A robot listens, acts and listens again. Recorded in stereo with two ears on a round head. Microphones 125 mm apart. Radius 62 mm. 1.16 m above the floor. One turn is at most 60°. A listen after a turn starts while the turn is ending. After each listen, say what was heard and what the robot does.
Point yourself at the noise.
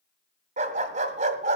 The dog barking: about 55° right or 125° right. Turn 55° right.
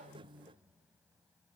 Keep listening.
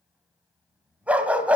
So it is at 10° right. Turn 10° right.
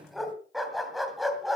Found it: a dog barking, straight ahead.